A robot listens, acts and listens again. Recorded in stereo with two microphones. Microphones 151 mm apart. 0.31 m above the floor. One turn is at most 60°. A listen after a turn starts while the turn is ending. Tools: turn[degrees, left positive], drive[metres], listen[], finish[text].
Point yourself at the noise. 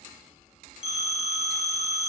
Thought: The phone ringing: about 55° right or 125° right.
Action: turn[-55]
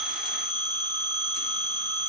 Thought: So it is at 40° right.
Action: turn[-40]
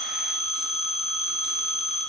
Action: finish[Facing the phone ringing.]